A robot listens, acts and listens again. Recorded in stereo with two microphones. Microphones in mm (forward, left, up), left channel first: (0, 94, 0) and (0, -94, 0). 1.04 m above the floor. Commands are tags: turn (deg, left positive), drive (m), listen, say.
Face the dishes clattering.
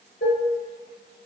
<turn deg="70"/>
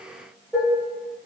<say>Found it: dishes clattering, straight ahead, under 1 m away.</say>